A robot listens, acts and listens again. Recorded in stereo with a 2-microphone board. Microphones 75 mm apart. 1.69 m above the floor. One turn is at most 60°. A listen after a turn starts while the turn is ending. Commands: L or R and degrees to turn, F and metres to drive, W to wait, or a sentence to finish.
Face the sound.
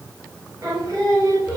R50
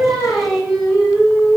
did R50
Facing the singing, over 4 m away.